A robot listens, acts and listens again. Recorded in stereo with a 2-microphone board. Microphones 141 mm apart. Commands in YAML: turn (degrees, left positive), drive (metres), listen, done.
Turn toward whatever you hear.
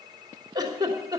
turn: -30
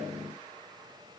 listen: true
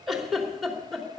done: "Facing the giggle, 2 to 4 m away."